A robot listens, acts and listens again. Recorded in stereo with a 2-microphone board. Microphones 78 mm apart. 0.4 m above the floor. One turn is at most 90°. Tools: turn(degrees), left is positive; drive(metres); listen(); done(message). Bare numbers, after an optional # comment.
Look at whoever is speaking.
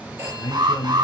# The man speaking: about 60° left or 120° left.
turn(60)
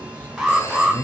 # So it is at 30° left.
turn(30)
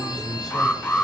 done("Found it: a man speaking, straight ahead.")